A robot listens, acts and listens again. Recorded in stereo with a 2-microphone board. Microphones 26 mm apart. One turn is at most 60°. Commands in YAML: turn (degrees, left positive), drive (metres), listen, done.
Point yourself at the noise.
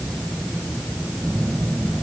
turn: -60
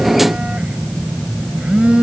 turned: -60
turn: -50
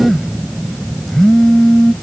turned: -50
done: "Facing the phone buzzing."